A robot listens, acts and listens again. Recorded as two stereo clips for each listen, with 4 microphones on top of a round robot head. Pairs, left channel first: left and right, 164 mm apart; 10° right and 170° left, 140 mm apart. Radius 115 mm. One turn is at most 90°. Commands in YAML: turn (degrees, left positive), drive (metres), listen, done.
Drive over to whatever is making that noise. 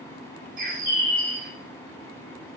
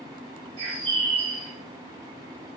turn: -90
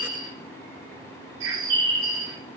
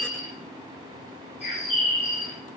turn: -70
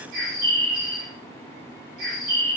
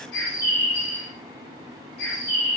turn: -40
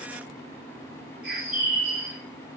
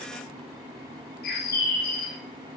drive: 1.0
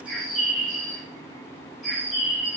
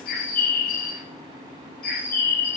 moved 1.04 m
drive: 1.0
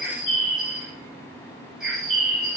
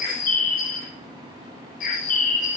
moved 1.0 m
drive: 1.0
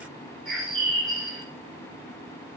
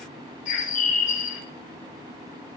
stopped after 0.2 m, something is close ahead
done: "Arrived at the bird, straight ahead."